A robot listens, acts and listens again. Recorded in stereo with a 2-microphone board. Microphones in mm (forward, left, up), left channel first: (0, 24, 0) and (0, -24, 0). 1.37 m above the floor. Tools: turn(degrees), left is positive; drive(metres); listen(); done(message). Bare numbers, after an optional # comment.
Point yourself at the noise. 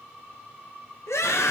turn(90)
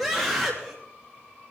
done("Found it: a scream, straight ahead, 2 to 4 m away.")